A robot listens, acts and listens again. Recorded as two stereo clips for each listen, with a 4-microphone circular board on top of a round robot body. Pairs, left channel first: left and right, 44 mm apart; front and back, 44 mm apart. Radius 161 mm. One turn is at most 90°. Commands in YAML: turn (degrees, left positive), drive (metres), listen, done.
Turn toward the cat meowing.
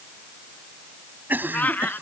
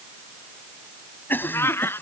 turn: 35
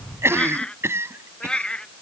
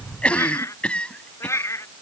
turn: 20
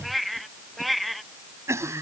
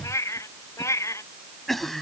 done: "Found it: a cat meowing, straight ahead."